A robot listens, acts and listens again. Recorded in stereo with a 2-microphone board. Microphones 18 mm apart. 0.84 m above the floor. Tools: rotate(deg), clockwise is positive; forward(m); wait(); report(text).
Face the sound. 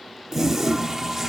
rotate(15)
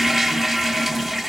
report("Facing the toilet flushing, 1 to 2 m away.")